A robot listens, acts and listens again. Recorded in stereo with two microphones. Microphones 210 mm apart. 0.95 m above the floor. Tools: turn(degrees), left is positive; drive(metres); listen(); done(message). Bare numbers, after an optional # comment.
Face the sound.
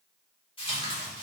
# The tearing paper: about 25° left or 155° left.
turn(25)
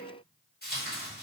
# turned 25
# So it is at 130° left.
turn(130)
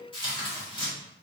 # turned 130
# The tearing paper is now 25° left.
turn(25)
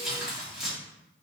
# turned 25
done("Found it: tearing paper, straight ahead, 1 to 2 m away.")